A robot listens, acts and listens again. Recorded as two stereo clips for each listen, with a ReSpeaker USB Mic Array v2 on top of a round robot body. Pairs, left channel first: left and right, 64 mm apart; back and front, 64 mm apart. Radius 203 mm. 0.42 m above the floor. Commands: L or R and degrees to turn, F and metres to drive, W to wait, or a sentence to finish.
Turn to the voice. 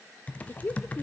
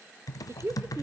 L35
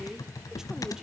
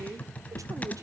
R10
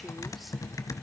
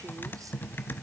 W
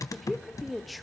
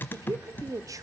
Found it: a woman speaking, straight ahead, 1 to 2 m away.